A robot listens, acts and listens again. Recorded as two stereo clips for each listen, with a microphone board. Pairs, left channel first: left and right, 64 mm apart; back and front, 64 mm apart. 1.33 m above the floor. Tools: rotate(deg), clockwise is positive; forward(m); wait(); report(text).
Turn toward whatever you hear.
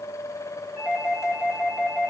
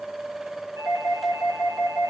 rotate(35)
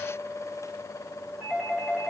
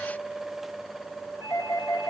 rotate(15)
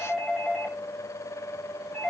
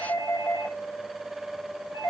report("Found it: a doorbell, straight ahead.")